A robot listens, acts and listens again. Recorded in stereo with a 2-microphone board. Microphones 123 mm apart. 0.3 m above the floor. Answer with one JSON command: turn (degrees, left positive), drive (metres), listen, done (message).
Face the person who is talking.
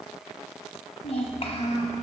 {"turn": 55}
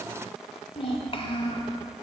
{"turn": 55}
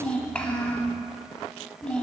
{"turn": 10}
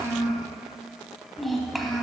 {"done": "Found it: a child speaking, straight ahead, 1 to 2 m away."}